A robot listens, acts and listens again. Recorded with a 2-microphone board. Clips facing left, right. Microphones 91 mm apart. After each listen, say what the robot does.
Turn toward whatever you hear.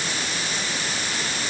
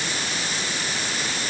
Keep listening.
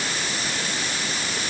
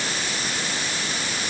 Keep listening.
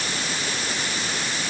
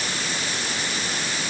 I can't make out anything to turn to.